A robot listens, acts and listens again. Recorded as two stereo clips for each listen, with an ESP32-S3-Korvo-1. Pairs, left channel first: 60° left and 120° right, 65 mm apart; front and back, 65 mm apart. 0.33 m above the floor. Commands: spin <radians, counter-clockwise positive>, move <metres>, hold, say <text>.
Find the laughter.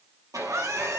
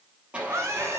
spin -2.53
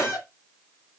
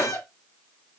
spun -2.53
spin 0.17
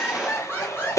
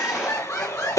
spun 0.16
spin 0.26
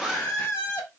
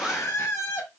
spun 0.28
spin 0.17
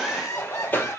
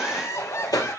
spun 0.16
spin 0.26
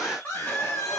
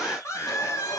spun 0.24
say Found it: laughter, straight ahead, 2 to 4 m away.